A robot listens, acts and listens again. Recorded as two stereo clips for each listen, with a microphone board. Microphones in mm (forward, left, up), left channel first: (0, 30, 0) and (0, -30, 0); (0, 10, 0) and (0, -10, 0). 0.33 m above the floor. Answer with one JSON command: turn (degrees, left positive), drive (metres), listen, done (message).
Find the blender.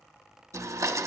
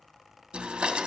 {"turn": -65}
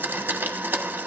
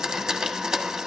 {"turn": -35}
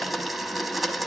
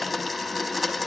{"done": "Found it: a blender, straight ahead, 1 to 2 m away."}